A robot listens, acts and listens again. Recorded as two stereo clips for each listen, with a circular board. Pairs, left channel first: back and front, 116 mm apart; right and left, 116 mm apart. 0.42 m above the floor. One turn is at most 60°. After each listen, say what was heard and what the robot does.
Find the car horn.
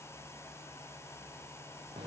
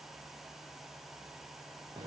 Keep listening.
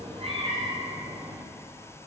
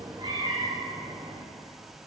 Keep listening.
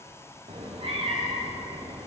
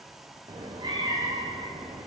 I can't make out a car horn to turn to.